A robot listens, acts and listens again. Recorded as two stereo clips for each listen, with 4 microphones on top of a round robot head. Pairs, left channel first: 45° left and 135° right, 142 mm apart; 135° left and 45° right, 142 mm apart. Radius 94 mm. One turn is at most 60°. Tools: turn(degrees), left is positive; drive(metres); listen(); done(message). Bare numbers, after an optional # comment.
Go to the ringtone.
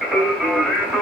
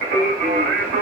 listen()
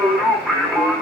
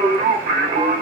listen()
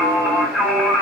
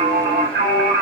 done("I can't make out a ringtone, only singing.")